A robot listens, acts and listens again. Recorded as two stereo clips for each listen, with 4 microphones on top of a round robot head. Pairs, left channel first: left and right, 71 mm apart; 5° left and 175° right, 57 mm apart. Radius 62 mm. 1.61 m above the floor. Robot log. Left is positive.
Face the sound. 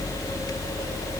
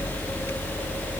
cmd idle
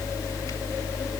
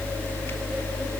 cmd idle
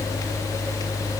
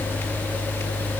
end: I can't make out anything to turn to.